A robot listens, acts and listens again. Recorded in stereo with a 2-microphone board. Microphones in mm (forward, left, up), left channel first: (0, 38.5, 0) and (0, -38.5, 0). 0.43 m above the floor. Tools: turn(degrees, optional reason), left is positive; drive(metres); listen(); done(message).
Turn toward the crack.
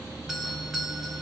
listen()
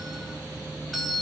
listen()
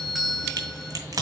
turn(degrees=-50, reason="The crack: about 50° right or 130° right.")
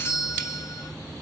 listen()
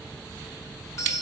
done("I heard a crack, but can't make it out now. It was about straight ahead or 80° right.")